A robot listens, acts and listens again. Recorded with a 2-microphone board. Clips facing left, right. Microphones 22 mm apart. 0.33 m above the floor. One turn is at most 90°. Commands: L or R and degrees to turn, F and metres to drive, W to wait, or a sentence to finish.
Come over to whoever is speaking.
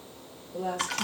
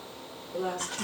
R50
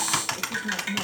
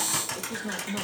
R80
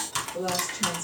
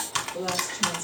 R10
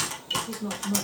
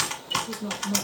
F1.0
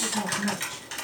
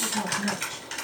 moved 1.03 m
F1.0
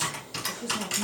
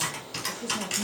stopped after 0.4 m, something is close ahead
R15
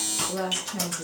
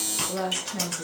Arrived at the woman speaking, straight ahead.